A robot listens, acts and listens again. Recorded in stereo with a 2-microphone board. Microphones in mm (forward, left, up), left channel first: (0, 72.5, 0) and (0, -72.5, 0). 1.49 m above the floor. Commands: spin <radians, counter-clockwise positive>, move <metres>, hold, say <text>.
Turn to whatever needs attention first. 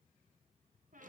hold
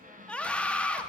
spin 0.52
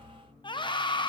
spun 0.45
spin 2.53
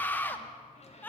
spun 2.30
spin 0.26
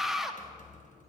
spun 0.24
say Found it: a scream, straight ahead.